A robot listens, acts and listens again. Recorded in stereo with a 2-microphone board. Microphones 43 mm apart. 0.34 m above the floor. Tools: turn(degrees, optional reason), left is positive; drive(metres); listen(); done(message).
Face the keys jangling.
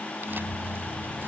turn(degrees=60, reason="The keys jangling: about 60° left or 120° left.")
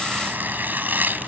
listen()
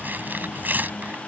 listen()
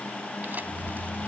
turn(degrees=60, reason="So it is at 60° left.")
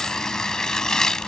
listen()
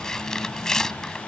listen()
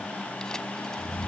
turn(degrees=-10, reason="The keys jangling is now 10° right.")
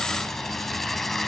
listen()
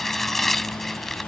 listen()
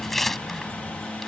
done("I heard keys jangling from this way, but can't make it out now.")